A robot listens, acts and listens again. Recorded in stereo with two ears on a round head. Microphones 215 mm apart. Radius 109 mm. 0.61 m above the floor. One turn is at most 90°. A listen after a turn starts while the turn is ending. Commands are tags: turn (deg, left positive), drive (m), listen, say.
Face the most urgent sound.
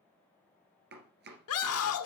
<turn deg="65"/>
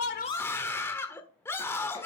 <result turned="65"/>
<turn deg="10"/>
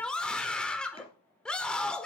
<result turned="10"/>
<say>Facing the scream, 1 to 2 m away.</say>